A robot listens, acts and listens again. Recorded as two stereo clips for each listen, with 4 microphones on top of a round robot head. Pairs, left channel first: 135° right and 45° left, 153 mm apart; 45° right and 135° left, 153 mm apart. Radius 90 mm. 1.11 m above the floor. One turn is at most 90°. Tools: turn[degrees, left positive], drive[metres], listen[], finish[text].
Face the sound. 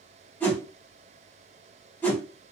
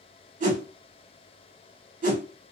Thought: The whoosh: 150° left.
Action: turn[90]
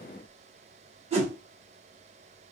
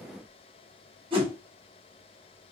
Thought: The whoosh is now 85° left.
Action: turn[85]
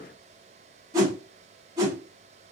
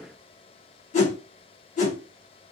Thought: The whoosh is now 15° right.
Action: turn[-15]
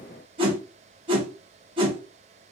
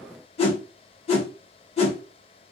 Action: finish[Found it: a whoosh, straight ahead, 1 to 2 m away.]